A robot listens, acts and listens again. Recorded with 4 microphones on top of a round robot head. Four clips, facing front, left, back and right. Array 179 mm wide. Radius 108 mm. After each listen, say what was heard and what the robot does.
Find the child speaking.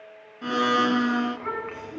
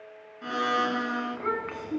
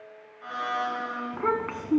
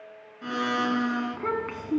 The child speaking: 160° right. Turn 160° right.
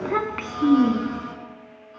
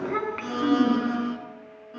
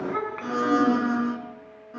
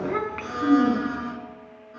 Found it: a child speaking, straight ahead.